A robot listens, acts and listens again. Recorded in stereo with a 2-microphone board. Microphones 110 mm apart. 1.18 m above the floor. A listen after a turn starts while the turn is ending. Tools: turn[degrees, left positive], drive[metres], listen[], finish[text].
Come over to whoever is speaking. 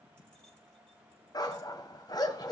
Action: listen[]
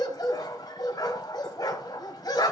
Action: listen[]
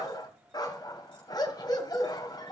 Action: finish[I can't make out anyone speaking, only a dog barking.]